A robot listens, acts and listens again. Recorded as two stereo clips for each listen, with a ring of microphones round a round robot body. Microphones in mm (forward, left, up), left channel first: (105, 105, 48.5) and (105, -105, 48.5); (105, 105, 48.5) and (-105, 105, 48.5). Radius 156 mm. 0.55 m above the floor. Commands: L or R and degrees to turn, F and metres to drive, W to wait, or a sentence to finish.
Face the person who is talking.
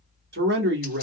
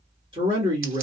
R115
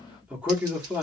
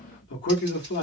Facing the man speaking.